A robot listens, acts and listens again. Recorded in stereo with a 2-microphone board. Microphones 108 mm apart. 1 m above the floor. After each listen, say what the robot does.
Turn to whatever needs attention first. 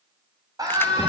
Turn 35° right.
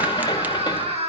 Turn 110° right.
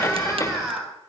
Found it: a scream, straight ahead.